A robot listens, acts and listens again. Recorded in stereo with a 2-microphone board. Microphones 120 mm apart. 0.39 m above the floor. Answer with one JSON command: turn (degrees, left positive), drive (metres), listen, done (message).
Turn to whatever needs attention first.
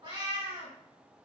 {"listen": true}
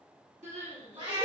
{"turn": -90}
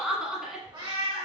{"done": "Facing the crying."}